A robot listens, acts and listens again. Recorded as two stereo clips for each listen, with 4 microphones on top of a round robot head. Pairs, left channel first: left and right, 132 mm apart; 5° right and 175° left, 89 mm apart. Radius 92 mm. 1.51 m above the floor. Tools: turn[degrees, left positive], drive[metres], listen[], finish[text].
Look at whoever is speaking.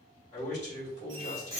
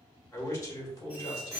Thought: The man speaking: 35° left.
Action: turn[35]
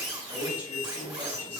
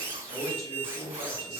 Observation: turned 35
Thought: The man speaking is now 20° right.
Action: turn[-20]
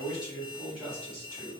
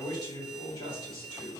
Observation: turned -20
Thought: The man speaking is now 10° right.
Action: turn[-10]
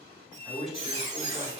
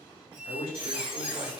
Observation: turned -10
Action: finish[Facing the man speaking.]